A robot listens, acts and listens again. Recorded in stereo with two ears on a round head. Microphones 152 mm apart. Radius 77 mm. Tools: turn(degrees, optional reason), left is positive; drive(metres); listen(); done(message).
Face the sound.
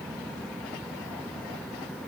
listen()
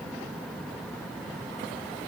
listen()
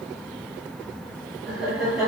turn(degrees=-30)
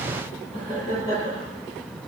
turn(degrees=30, reason="So it is at 30° left.")
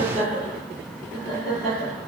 done("Found it: laughter, straight ahead.")